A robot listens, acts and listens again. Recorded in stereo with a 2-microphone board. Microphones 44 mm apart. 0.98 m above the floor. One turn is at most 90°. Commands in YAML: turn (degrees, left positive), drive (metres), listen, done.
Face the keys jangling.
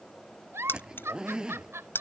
turn: 60
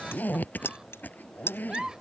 turn: 60
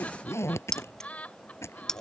turn: 10
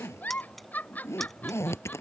listen: true
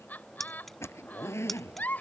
done: "Facing the keys jangling."